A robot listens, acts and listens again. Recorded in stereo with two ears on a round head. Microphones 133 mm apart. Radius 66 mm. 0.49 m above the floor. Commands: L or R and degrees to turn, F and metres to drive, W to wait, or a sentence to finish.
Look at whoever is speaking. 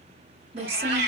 R40
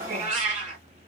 W
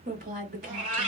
R90
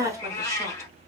R25
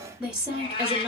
R10
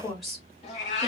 Found it: a woman speaking, straight ahead, 1 to 2 m away.